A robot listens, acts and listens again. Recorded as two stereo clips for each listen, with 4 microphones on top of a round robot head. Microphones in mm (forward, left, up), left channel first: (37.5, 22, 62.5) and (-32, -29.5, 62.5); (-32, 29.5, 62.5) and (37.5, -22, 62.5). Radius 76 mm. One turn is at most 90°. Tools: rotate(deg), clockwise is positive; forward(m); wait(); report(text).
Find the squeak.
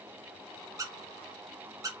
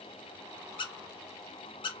rotate(-90)
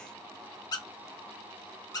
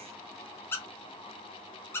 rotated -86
rotate(-80)
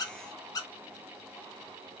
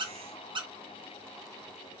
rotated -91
rotate(10)
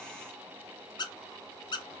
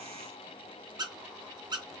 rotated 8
report("Facing the squeak.")